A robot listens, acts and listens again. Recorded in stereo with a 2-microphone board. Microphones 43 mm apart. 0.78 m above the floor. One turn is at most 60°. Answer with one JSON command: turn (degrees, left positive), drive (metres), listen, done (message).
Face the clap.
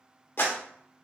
{"turn": 55}
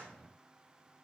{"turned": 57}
{"listen": true}
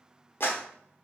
{"turn": 60}
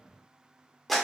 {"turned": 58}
{"done": "Facing the clap, under 1 m away."}